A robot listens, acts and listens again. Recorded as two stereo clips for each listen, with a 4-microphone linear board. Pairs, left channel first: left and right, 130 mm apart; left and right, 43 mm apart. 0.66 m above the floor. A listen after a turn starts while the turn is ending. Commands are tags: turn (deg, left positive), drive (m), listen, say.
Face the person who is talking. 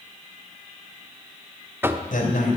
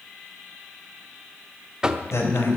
<turn deg="90"/>
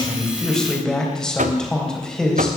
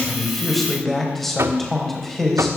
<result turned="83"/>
<say>Found it: a man speaking, straight ahead, 2 to 4 m away.</say>